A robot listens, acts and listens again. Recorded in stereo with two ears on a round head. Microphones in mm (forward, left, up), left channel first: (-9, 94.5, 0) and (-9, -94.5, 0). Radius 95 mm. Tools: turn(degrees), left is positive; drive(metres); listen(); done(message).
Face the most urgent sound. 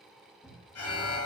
turn(degrees=75)
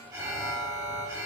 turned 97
turn(degrees=-15)
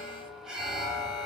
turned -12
done("Facing the alarm.")